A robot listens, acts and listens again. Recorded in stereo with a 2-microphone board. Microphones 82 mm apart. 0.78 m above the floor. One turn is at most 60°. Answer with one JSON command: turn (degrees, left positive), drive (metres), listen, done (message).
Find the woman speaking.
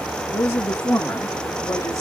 {"turn": 30}
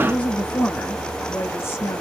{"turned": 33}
{"turn": 30}
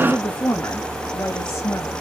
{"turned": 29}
{"turn": 40}
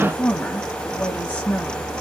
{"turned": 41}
{"turn": 15}
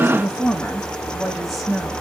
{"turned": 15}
{"done": "Facing the woman speaking."}